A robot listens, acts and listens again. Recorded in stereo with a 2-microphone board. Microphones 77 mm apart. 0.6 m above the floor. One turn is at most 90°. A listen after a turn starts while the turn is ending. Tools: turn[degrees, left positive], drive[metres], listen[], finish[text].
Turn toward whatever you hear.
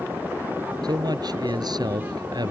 Thought: The man speaking: about 60° right or 120° right.
Action: turn[-60]
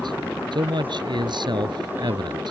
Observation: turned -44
Thought: So it is at 70° right.
Action: turn[-70]
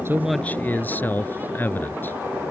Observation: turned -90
Thought: The man speaking is now 25° left.
Action: turn[25]
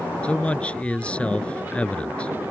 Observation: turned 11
Thought: The man speaking is now 15° left.
Action: turn[15]
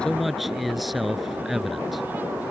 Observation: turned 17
Action: finish[Found it: a man speaking, straight ahead.]